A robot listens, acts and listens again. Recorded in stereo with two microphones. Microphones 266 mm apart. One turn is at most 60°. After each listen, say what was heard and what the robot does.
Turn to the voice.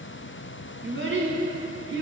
The child speaking: about 45° right or 135° right. Turn 45° right.
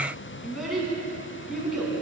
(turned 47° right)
Found it: a child speaking, straight ahead, 1 to 2 m away.